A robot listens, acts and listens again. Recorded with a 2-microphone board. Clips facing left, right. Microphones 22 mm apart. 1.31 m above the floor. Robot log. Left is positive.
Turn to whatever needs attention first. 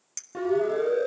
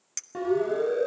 cmd yaw -30
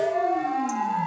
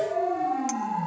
note: So it is at 25° left.
cmd yaw +25
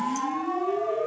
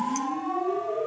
end: Facing the siren.